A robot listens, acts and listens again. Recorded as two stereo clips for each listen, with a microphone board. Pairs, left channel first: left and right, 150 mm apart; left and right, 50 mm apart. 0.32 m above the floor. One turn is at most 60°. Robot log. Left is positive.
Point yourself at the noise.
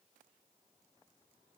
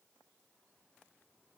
cmd idle
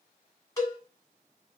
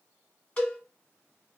note: The cowbell: about 20° left or 160° left.
cmd yaw +20
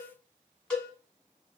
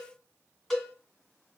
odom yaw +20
end: Facing the cowbell.